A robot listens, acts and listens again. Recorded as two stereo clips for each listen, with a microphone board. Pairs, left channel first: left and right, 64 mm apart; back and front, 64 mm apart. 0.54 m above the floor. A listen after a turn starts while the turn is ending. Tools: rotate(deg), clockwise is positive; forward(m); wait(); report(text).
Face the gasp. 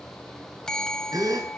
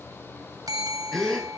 rotate(100)
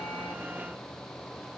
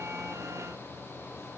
report("I heard a gasp from this way, but can't make it out now.")